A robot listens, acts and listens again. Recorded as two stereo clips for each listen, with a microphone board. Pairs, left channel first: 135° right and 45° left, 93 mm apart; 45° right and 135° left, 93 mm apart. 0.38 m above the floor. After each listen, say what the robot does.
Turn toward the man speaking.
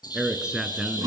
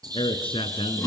Turn 40° right.
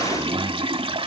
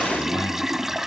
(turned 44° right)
Keep listening.
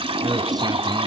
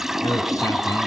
Found it: a man speaking, straight ahead, 2 to 4 m away.